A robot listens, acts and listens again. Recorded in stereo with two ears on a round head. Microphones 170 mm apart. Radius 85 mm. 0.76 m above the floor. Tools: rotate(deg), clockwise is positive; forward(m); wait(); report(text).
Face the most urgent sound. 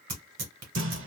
wait()
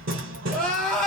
rotate(-30)
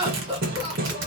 rotate(25)
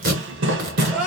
report("Found it: crying, straight ahead.")